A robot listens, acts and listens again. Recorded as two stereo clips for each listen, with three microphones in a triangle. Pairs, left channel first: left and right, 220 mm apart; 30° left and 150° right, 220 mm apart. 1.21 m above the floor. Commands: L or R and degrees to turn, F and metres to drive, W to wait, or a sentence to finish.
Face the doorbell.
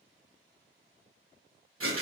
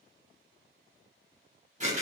W
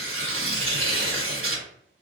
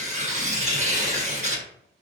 W
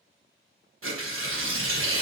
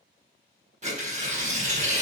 I can't make out a doorbell, only tearing paper.